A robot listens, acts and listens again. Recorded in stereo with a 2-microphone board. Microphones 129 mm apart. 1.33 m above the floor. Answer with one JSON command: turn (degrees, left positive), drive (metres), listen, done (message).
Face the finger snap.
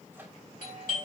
{"listen": true}
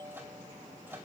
{"listen": true}
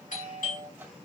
{"done": "I can't make out a finger snap to turn to."}